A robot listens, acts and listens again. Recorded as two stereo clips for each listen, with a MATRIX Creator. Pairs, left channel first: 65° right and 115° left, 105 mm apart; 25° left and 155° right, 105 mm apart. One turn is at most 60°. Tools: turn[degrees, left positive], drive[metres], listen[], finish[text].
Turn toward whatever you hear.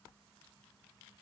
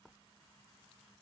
Action: listen[]
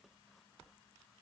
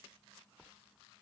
Action: listen[]
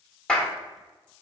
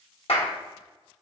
Thought: The clap: 10° left.
Action: turn[10]
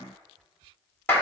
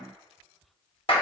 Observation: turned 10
Action: finish[Facing the clap, under 1 m away.]